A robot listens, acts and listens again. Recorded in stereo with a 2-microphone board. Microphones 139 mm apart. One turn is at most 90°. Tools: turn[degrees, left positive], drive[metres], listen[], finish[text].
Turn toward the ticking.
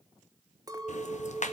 Thought: The ticking: about 60° left or 120° left.
Action: turn[60]
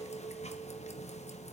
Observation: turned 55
Thought: So it is at 60° left.
Action: turn[60]
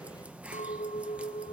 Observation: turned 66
Thought: The ticking is now 10° right.
Action: turn[-10]
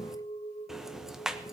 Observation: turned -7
Action: finish[Facing the ticking.]